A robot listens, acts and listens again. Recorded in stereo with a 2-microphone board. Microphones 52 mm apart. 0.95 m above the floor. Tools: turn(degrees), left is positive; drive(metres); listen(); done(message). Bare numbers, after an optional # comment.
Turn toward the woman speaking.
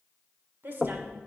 # The woman speaking: about 50° right or 130° right.
turn(-50)
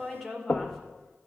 done("Found it: a woman speaking, straight ahead.")